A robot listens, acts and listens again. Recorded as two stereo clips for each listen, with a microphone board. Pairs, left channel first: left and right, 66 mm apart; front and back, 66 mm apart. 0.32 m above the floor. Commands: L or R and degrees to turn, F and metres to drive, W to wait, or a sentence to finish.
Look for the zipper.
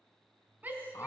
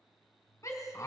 W
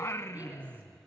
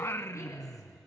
W
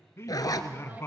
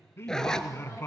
L80
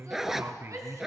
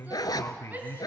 Found it: a zipper, straight ahead, 1 to 2 m away.